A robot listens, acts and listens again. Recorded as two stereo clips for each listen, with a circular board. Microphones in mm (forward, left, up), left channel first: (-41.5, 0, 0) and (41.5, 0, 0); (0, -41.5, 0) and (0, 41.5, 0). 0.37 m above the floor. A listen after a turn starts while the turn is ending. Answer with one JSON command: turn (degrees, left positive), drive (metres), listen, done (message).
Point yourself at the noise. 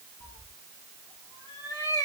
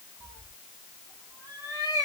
{"turn": 135}
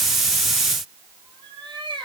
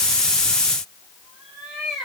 {"done": "Facing the cat meowing, 2 to 4 m away."}